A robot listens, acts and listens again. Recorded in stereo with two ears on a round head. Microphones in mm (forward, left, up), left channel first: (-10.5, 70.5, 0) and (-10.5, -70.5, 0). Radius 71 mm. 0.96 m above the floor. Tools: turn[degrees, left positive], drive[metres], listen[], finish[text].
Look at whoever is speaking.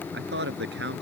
Action: turn[-90]
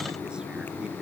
Action: listen[]
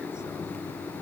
Action: listen[]
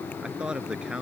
Action: finish[Facing the man speaking.]